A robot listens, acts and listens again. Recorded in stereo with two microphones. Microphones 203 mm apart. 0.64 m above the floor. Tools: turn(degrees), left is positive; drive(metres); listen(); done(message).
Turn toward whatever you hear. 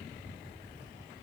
listen()
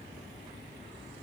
listen()
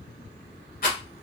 turn(degrees=45)
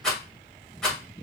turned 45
done("Facing the rattle.")